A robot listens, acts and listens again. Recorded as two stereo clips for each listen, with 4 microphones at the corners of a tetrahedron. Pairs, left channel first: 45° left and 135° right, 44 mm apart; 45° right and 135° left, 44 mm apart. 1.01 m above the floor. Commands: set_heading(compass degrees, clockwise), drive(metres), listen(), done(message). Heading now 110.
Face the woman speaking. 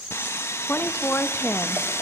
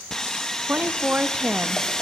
set_heading(25)
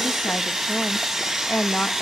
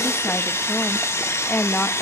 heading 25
done("Facing the woman speaking.")